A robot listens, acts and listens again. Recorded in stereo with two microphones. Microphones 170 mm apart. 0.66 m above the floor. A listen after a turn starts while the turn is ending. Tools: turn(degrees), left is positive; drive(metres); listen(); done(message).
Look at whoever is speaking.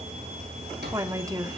turn(degrees=-20)
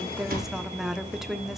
done("Facing the woman speaking.")